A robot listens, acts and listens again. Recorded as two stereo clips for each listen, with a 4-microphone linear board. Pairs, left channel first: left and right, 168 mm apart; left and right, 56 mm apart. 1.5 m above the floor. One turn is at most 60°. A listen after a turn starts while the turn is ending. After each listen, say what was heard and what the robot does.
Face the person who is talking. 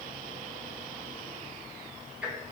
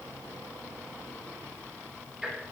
Keep listening.
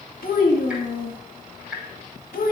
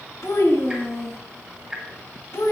The child speaking: about 70° left or 110° left. Turn 60° left.
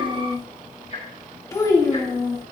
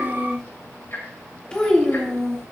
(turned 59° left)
So it is at 20° left. Turn 20° left.
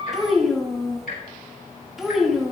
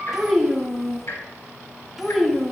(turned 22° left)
Found it: a child speaking, straight ahead.